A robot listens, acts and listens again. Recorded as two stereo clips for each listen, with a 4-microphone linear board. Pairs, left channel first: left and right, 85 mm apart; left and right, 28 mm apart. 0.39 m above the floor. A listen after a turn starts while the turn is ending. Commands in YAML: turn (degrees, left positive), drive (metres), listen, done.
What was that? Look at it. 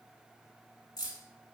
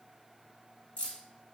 turn: 50
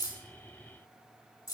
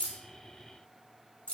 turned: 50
turn: 65
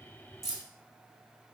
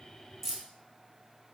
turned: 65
done: "Facing the keys jangling."